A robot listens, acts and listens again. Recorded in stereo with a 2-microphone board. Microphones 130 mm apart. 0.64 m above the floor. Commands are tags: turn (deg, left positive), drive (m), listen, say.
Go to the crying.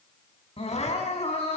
<turn deg="50"/>
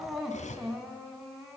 <drive m="1.0"/>
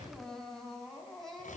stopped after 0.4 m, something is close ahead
<say>Something is in my way. I am facing the crying but have not reached it.</say>